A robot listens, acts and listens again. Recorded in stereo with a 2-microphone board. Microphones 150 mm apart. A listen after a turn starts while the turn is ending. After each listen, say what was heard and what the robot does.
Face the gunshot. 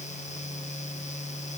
Keep listening.
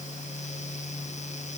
Keep listening.
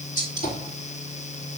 The gunshot: about 75° left or 105° left. Turn 75° left.
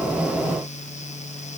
Keep listening.
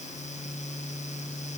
I heard a gunshot, but can't make it out now. It was about straight ahead or 30° left.